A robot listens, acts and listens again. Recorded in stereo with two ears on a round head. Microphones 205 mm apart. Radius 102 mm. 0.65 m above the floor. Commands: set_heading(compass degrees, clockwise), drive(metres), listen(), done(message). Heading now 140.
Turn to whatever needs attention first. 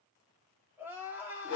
set_heading(170)
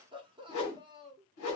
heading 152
set_heading(312)
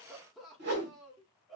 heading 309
done("Facing the crying, under 1 m away.")